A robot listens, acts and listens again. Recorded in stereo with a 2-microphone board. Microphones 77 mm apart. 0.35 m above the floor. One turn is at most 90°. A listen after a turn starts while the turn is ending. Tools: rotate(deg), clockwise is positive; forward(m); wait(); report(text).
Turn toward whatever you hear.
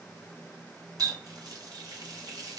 rotate(55)
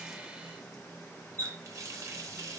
rotate(50)
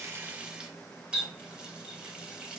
rotate(15)
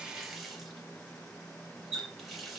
report("Found it: a running tap, straight ahead, 1 to 2 m away.")